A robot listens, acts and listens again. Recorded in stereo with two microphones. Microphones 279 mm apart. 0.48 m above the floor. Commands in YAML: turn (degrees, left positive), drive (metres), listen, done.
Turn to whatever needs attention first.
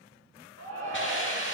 turn: -65
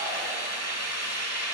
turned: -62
listen: true
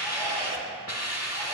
turn: -15
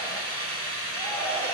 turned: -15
listen: true
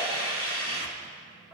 listen: true
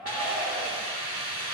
done: "Facing the shout."